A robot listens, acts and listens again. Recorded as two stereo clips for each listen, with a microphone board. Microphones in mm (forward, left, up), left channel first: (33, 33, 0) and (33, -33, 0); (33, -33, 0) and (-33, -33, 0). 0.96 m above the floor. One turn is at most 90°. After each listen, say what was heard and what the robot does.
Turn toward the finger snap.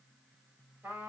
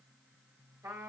Keep listening.
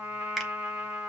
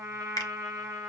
Found it: a finger snap, straight ahead.